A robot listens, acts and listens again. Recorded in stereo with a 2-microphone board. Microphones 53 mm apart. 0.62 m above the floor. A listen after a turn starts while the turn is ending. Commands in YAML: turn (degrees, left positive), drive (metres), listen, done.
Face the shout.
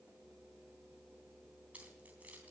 listen: true
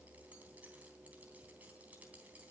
listen: true
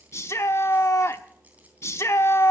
turn: 60
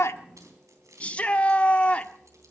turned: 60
turn: 25
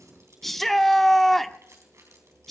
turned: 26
done: "Found it: a shout, straight ahead, under 1 m away."